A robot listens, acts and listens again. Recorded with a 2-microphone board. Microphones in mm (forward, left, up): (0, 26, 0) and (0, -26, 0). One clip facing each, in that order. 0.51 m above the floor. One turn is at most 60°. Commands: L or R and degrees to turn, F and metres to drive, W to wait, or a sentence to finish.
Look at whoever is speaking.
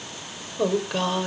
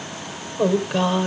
L30
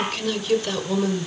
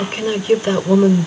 R30
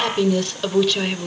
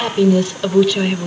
Facing the woman speaking, 2 to 4 m away.